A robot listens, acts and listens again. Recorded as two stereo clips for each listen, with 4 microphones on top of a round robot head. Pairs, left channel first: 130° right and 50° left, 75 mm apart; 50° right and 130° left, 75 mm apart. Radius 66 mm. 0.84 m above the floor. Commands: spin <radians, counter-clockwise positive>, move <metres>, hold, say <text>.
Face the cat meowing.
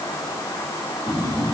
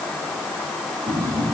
hold
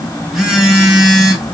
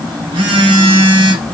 hold
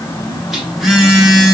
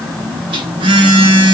say I can't make out a cat meowing, only a phone buzzing.